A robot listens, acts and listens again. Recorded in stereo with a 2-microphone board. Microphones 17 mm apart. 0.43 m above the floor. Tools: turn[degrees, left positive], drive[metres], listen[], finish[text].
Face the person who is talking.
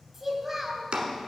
Thought: The child speaking: about 15° right or 165° right.
Action: turn[-15]
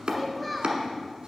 Action: finish[Found it: a child speaking, straight ahead.]